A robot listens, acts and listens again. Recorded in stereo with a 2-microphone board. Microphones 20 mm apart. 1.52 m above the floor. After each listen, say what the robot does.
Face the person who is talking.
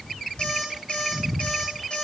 Keep listening.
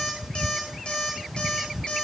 Keep listening.
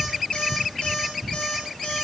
I can't make out anyone speaking to turn to.